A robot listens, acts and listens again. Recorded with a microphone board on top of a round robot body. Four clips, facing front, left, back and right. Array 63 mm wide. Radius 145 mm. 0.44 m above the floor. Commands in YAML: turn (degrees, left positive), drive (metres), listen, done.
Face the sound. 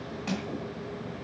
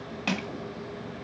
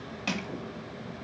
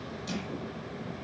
turn: 105
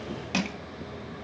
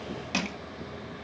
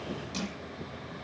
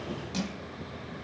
turn: 35
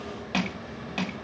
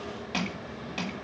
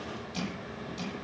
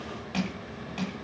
turn: 10
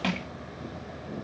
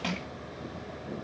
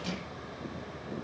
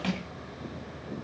done: "Found it: crushing, straight ahead."